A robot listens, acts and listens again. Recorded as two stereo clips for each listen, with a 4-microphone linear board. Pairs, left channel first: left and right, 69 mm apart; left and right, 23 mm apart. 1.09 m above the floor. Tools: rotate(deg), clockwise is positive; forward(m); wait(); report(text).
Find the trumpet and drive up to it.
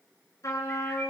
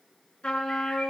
rotate(-65)
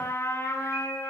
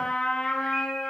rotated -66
rotate(-50)
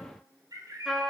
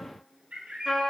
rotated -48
forward(1.0)
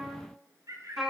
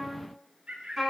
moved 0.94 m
forward(1.0)
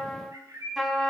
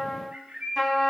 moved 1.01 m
forward(1.0)
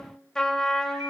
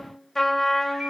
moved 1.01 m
rotate(-10)
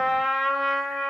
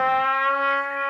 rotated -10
forward(1.0)
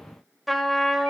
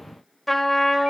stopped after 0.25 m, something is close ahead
report("I am next to the trumpet.")